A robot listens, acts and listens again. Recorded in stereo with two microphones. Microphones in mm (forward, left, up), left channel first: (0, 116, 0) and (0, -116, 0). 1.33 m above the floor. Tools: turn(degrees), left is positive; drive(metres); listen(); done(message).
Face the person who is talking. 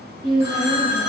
turn(degrees=-65)
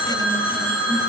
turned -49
listen()
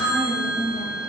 turn(degrees=-20)
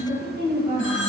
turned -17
done("Found it: a woman speaking, straight ahead.")